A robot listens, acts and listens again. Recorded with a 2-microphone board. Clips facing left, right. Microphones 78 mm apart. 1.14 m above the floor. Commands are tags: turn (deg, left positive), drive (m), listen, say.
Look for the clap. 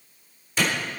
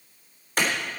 <turn deg="-50"/>
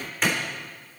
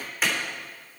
<say>Found it: a clap, straight ahead.</say>